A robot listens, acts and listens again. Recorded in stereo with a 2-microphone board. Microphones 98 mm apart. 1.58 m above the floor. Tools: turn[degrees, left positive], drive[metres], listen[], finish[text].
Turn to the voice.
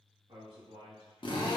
Thought: The man speaking: about 55° right or 125° right.
Action: turn[-55]
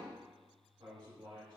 Thought: So it is at 70° right.
Action: turn[-70]
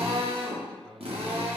Thought: The man speaking is now 15° left.
Action: turn[15]
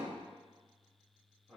Action: finish[Facing the man speaking.]